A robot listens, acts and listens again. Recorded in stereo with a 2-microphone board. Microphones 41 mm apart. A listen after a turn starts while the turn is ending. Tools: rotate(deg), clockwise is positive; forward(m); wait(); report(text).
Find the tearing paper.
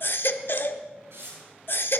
rotate(90)
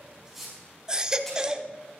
wait()
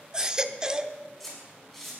report("Facing the tearing paper, over 4 m away.")